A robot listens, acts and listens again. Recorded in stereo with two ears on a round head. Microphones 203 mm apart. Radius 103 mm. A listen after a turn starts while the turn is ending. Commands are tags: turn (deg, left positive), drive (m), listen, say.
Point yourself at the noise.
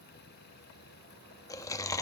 <turn deg="30"/>
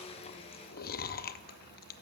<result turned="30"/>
<turn deg="135"/>
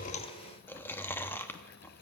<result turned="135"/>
<turn deg="10"/>
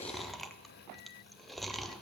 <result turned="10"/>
<say>Facing the chewing.</say>